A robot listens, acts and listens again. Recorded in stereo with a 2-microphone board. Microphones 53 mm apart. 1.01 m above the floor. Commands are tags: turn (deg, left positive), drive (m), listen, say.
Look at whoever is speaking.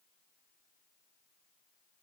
<listen/>
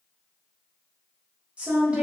<turn deg="-25"/>
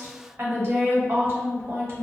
<turn deg="-130"/>
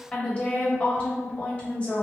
<turn deg="25"/>
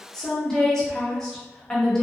<turn deg="10"/>
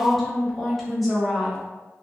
<say>Found it: a woman speaking, straight ahead.</say>